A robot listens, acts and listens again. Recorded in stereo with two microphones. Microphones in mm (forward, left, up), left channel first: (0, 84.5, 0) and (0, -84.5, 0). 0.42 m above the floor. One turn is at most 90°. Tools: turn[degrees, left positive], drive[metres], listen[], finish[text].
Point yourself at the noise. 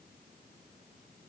Action: listen[]
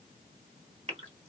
Thought: The gasp: about 40° right or 140° right.
Action: turn[-40]
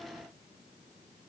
Action: listen[]
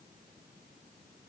Action: finish[I heard a gasp, but can't make it out now. It was about straight ahead or 100° right.]